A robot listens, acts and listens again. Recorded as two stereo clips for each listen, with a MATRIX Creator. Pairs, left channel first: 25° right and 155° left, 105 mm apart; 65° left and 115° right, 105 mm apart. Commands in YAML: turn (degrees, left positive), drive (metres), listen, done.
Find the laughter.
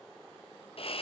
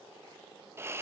listen: true
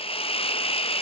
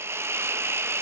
listen: true
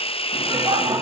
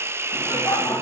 turn: 120
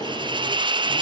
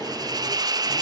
done: "Facing the laughter, 2 to 4 m away."